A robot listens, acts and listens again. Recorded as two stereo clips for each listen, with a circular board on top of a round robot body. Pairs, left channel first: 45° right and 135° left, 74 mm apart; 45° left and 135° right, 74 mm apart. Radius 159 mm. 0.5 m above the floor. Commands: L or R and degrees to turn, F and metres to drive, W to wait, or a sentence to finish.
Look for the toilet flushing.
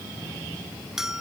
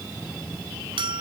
W
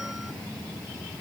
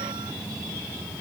W
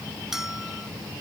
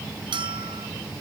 I can't make out a toilet flushing, only a bell.